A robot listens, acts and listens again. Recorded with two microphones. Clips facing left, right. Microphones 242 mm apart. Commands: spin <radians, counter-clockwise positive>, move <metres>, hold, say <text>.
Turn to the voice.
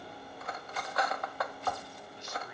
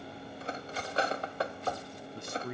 spin -0.96
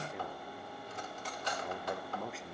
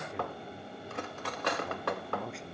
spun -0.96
say Found it: a man speaking, straight ahead, under 1 m away.